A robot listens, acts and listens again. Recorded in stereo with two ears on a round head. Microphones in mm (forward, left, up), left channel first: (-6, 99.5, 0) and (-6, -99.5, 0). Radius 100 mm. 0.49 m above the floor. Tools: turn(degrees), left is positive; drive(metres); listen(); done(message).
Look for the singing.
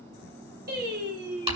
turn(degrees=-45)
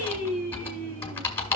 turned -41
turn(degrees=-90)
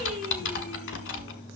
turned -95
listen()
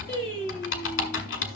turn(degrees=10)
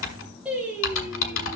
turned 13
done("Found it: singing, straight ahead, over 4 m away.")